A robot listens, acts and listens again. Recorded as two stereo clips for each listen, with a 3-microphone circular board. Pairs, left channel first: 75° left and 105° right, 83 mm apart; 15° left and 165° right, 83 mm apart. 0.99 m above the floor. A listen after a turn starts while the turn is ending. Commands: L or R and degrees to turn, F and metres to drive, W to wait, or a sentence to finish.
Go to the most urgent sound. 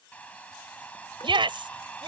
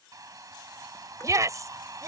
R115
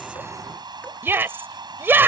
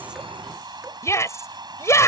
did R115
R40
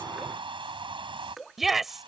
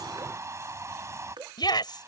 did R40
R15
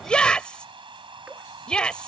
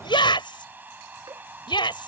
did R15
F1.0
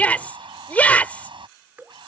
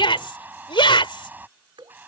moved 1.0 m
F1.0
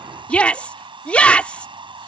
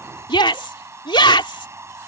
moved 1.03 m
F1.0
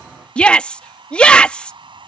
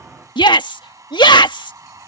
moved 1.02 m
F1.0
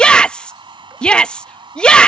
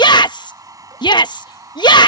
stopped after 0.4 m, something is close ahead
Arrived at the shout, straight ahead.